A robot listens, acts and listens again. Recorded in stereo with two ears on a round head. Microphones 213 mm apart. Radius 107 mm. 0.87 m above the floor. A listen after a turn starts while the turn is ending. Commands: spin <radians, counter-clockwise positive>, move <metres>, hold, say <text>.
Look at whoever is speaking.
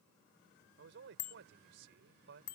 spin -0.87
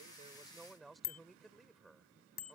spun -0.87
say Found it: a man speaking, straight ahead.